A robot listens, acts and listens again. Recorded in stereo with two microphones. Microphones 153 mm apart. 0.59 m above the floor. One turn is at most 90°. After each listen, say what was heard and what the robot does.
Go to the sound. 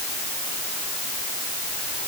Keep listening.
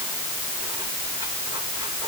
Keep listening.
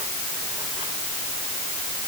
I can't make out anything.